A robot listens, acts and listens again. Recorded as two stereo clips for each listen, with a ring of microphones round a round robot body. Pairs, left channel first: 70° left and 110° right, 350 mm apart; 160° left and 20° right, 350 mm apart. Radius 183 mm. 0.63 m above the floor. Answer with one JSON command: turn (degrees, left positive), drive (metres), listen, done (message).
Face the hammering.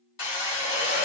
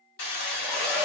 {"turn": 110}
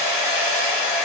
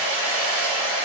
{"done": "Found it: hammering, straight ahead, 1 to 2 m away."}